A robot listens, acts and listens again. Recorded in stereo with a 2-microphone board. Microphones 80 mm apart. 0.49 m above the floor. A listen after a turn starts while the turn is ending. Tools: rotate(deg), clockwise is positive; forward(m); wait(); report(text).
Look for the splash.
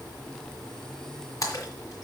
rotate(-45)
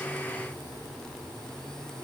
wait()
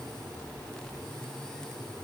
report("I heard a splash, but can't make it out now. It was about straight ahead or 90° left.")